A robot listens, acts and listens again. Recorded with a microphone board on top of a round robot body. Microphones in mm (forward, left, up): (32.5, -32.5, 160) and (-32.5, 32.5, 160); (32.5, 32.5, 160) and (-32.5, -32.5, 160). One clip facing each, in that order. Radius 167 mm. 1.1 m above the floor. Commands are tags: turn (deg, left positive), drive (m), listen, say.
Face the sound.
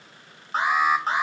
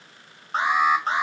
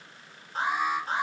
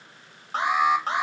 <turn deg="-135"/>
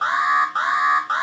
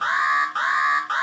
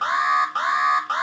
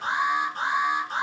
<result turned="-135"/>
<turn deg="30"/>
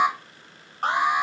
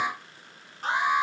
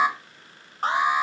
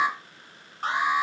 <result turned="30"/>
<say>Facing the alarm.</say>